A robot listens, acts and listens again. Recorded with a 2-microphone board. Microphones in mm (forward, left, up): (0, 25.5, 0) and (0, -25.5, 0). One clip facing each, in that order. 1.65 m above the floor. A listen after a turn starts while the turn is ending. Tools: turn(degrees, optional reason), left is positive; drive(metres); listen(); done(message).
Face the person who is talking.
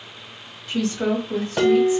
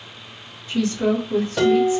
turn(degrees=90)
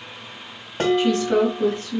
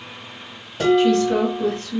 done("Found it: a woman speaking, straight ahead.")